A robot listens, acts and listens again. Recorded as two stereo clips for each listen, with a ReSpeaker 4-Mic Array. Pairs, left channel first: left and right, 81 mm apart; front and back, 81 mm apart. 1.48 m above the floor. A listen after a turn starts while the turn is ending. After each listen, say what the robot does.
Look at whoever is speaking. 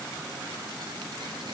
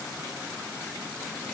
Keep listening.
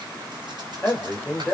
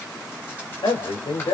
Turn 20° left.
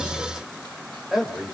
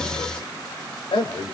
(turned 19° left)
Facing the man speaking, over 4 m away.